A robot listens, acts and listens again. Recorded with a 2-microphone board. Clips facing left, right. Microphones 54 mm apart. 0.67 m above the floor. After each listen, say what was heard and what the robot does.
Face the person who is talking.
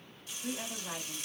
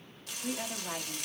Turn 30° right.
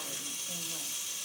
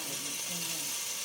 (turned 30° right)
Keep listening.
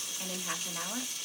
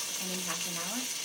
So it is at 15° left. Turn 15° left.
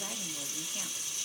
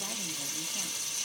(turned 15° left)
Keep listening.
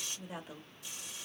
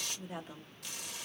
Facing the woman speaking, 1 to 2 m away.